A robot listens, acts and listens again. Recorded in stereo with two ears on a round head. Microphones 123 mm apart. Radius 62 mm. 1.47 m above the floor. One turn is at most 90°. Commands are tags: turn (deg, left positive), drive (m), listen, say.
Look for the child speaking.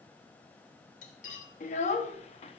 <turn deg="45"/>
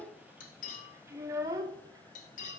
<turn deg="-25"/>
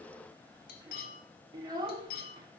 <turn deg="-30"/>
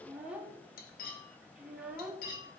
<turn deg="-10"/>
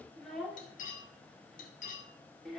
<say>Found it: a child speaking, straight ahead.</say>